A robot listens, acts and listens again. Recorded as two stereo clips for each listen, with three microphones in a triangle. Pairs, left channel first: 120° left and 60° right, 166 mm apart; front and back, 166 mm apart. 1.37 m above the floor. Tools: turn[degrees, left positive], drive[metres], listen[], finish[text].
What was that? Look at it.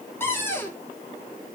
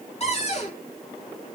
Thought: The cupboard door: 45° left.
Action: turn[45]
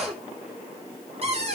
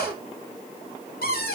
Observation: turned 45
Thought: The cupboard door is now 10° right.
Action: turn[-10]
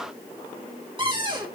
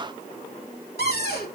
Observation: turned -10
Action: finish[Facing the cupboard door.]